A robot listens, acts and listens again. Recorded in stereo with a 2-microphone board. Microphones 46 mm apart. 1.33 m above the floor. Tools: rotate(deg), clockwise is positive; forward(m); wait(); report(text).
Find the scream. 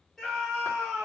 rotate(-30)
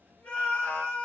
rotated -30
rotate(-150)
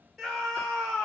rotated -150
report("Found it: a scream, straight ahead.")